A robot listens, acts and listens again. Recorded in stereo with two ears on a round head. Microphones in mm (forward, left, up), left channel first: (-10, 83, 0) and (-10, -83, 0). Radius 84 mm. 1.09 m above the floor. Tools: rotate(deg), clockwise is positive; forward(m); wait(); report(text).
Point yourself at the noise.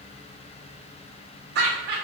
rotate(60)
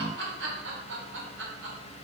rotate(70)
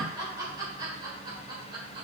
rotate(25)
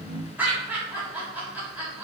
rotate(10)
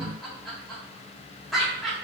report("Facing the laughter, 2 to 4 m away.")